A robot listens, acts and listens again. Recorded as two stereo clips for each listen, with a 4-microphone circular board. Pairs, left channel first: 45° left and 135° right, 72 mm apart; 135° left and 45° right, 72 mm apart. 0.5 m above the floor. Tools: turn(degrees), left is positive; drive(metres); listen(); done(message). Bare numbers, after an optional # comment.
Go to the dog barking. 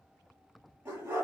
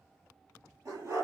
# The dog barking: 85° right.
turn(-85)
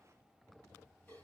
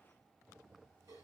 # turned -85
listen()
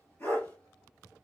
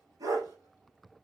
# The dog barking is now 20° right.
turn(-20)
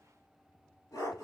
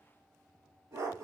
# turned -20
drive(1.0)
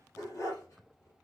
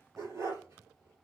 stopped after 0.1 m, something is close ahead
done("Something is in my way. I am facing the dog barking but have not reached it.")